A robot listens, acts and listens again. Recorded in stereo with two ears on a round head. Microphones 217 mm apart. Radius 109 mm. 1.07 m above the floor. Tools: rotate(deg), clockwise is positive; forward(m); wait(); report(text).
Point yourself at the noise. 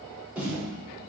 rotate(30)
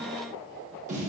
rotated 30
rotate(145)
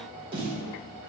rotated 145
rotate(25)
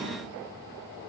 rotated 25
wait()
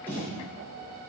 rotate(-10)
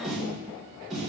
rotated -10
report("Found it: a snare drum, straight ahead.")